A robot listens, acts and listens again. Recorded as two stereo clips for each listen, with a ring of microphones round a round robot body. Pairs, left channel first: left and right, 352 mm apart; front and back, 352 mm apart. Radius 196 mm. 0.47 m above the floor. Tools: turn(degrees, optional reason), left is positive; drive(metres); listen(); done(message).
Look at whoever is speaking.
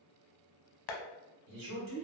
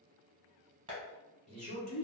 turn(degrees=-110, reason="The man speaking: 110° right.")
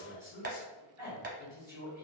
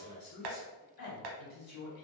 done("Found it: a man speaking, straight ahead, 1 to 2 m away.")